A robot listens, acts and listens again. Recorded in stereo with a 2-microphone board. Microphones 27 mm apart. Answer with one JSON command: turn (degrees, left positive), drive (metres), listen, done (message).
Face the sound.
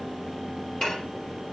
{"turn": 40}
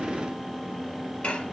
{"turn": 100}
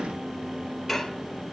{"done": "Facing the dishes clattering, 1 to 2 m away."}